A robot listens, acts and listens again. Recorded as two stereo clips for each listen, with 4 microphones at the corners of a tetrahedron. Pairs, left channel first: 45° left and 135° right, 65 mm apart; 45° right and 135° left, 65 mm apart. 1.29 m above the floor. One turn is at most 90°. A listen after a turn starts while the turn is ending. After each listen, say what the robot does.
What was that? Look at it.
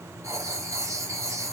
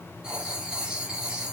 Turn 90° right.
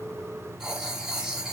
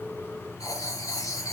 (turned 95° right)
Turn 55° right.
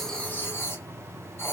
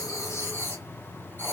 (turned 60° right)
Facing the writing, 1 to 2 m away.